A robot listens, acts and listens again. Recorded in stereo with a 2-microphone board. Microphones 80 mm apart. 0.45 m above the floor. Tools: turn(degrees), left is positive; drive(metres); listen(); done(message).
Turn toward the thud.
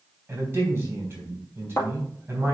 turn(degrees=30)
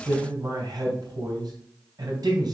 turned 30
listen()
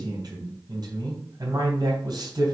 done("I heard a thud, but can't make it out now. It was about straight ahead or 120° left.")